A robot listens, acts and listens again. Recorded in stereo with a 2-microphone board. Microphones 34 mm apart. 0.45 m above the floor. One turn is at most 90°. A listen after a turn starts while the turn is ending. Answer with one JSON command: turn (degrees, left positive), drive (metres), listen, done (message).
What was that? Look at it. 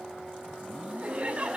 {"turn": -40}
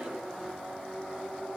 {"listen": true}
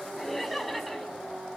{"done": "Found it: laughter, straight ahead."}